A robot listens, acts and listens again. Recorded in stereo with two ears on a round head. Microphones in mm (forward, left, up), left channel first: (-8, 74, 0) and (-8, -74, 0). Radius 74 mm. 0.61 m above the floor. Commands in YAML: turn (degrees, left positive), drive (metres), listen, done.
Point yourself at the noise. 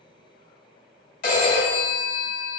turn: 60
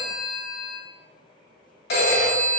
turn: 60
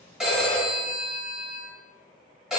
done: "Facing the phone ringing, 1 to 2 m away."